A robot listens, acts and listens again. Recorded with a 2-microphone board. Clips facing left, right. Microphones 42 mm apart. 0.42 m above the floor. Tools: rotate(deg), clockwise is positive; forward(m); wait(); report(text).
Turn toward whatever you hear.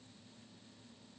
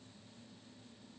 wait()
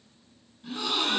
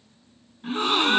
rotate(45)
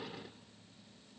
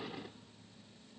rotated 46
wait()
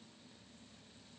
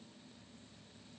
report("I heard a gasp, but can't make it out now. It was about straight ahead or 90° right.")